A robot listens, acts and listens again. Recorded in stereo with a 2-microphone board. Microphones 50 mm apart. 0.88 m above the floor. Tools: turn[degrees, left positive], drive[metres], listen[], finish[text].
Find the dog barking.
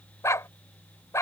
Action: turn[90]
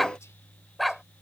Action: finish[Facing the dog barking.]